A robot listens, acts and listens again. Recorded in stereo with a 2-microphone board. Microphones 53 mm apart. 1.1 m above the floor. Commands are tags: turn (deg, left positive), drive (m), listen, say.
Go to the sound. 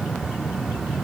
<listen/>
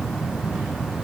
<listen/>
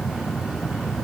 <say>I can't make out anything.</say>